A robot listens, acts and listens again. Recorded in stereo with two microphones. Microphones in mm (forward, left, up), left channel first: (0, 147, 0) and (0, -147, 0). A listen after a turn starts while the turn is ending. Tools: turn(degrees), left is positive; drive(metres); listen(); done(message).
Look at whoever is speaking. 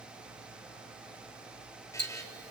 listen()
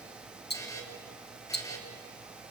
listen()
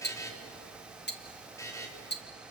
done("I can't make out anyone speaking, only a buzzer and ticking.")